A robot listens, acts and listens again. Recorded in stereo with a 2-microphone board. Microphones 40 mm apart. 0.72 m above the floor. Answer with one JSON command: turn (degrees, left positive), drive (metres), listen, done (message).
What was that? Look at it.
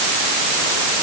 {"listen": true}
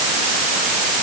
{"listen": true}
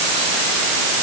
{"done": "I can't make out anything."}